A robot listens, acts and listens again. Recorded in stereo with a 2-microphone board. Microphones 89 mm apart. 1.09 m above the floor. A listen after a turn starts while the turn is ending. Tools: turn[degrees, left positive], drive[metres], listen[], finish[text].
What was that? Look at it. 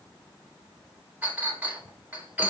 Thought: The clink: about 15° right or 165° right.
Action: turn[-15]
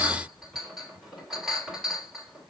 Action: finish[Found it: a clink, straight ahead.]